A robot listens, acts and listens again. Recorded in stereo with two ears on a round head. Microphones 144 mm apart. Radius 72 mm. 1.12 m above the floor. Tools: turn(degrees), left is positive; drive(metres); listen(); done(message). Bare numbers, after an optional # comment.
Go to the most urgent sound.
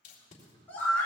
turn(30)
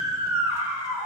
# So it is at 15° right.
turn(-15)
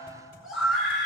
drive(1.0)
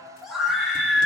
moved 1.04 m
drive(1.0)
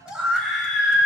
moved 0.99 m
drive(1.0)
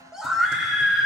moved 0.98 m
drive(1.0)
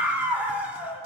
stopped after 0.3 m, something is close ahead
# The scream is now 10° right.
turn(-10)
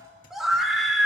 done("I am next to the scream.")